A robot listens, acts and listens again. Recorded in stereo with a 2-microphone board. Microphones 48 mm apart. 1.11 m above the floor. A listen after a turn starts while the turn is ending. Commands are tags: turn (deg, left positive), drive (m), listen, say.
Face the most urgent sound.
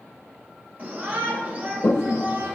<turn deg="-30"/>
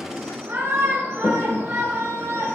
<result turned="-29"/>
<turn deg="-120"/>
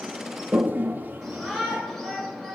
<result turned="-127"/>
<say>Facing the shout, over 4 m away.</say>